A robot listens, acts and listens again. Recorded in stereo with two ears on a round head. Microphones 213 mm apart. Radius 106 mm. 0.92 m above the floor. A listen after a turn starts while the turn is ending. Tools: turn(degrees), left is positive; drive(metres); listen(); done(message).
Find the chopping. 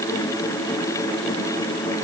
listen()
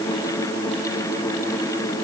listen()
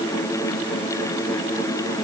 done("I can't make out chopping.")